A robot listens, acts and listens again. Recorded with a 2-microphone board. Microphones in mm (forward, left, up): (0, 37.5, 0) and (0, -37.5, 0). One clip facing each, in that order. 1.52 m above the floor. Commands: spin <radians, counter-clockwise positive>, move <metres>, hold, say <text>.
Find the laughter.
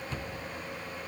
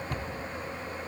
hold
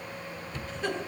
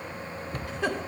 spin -1.57
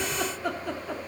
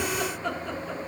say Facing the laughter, 2 to 4 m away.